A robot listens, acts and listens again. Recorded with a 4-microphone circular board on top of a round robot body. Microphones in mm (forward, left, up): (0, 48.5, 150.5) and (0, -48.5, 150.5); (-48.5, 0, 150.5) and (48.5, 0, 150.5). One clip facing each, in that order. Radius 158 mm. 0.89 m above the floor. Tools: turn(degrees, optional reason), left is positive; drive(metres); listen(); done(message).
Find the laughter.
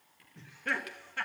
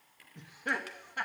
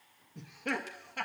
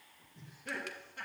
turn(degrees=-165, reason="The laughter: 165° right.")
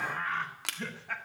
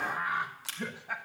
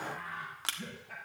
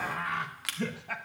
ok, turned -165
turn(degrees=-15, reason="The laughter is now 15° right.")
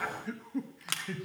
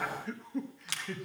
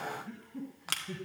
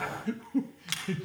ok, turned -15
done("Found it: laughter, straight ahead.")